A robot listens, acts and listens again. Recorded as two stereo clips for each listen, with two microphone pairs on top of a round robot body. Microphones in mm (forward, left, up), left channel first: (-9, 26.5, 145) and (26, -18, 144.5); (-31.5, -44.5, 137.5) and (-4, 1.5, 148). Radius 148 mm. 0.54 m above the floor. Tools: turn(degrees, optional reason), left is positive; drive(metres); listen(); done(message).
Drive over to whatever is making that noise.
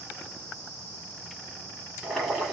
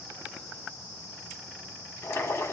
turn(degrees=-140, reason="The boiling: 140° right.")
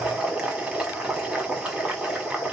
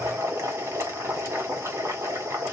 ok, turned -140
turn(degrees=25, reason="The boiling is now 25° left.")
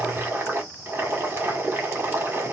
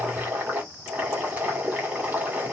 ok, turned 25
drive(metres=1.0)
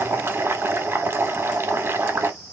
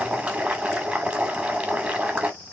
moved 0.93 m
turn(degrees=-10, reason="The boiling is now 10° right.")
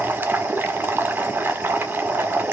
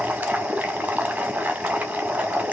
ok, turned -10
drive(metres=1.0)
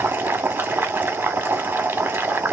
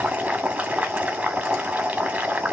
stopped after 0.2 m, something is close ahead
done("I am next to the boiling.")